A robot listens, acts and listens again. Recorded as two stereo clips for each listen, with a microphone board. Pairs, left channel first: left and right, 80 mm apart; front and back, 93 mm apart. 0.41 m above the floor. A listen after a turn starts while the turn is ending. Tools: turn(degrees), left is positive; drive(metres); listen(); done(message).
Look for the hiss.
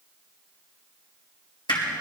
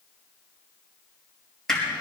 listen()
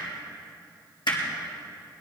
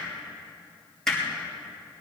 listen()
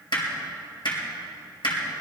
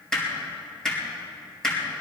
done("I can't make out a hiss, only hammering.")